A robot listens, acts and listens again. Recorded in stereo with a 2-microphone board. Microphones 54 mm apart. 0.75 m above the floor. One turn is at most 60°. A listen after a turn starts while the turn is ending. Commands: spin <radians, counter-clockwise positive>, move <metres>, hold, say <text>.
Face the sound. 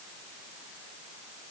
hold
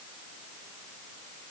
hold
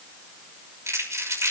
spin -1.05
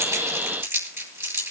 spin -0.96
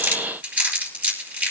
spin -0.61
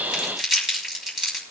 say Facing the crumpling.